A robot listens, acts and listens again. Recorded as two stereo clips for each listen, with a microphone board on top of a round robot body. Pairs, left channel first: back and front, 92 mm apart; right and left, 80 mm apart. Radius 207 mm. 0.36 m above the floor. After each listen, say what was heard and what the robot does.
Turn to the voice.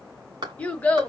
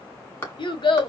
The child speaking: 105° right. Turn 105° right.
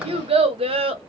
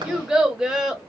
The child speaking is now 10° left. Turn 10° left.
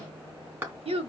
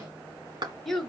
Facing the child speaking.